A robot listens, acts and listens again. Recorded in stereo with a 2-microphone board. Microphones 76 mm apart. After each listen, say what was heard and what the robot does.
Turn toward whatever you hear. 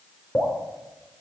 The dripping: about 30° left or 150° left. Turn 30° left.
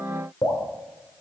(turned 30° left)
So it is at 120° left. Turn 120° left.
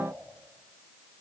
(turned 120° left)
Keep listening.
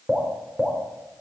The dripping is now 15° right. Turn 15° right.
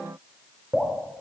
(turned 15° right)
Found it: dripping, straight ahead, 2 to 4 m away.